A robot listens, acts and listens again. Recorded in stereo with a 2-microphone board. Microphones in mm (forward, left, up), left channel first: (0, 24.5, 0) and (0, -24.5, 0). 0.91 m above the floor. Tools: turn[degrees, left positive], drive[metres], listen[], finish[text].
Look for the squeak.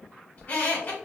Thought: The squeak: about 35° left or 145° left.
Action: turn[35]
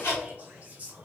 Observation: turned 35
Thought: So it is at 105° left.
Action: turn[105]
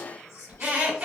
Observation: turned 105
Thought: The squeak is now 30° right.
Action: turn[-30]
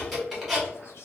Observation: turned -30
Action: finish[Found it: a squeak, straight ahead, 1 to 2 m away.]